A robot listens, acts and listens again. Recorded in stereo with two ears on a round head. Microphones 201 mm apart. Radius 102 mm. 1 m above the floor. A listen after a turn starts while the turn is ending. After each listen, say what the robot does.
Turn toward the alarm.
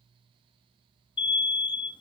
Turn 20° left.
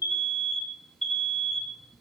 Found it: an alarm, straight ahead.